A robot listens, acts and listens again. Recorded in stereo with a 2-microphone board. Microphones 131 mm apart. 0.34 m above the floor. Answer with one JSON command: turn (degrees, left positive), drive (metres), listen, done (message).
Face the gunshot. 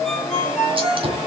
{"turn": -45}
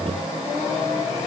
{"listen": true}
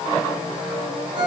{"done": "I heard a gunshot, but can't make it out now. It was about straight ahead or 90° right."}